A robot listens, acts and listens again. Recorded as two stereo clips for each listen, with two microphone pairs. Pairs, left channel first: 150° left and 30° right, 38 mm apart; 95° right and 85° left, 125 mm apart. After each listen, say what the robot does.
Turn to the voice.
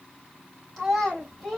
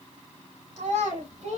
Turn 70° left.
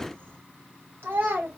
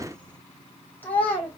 Turn 25° right.
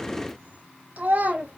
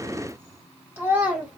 Found it: a child speaking, straight ahead.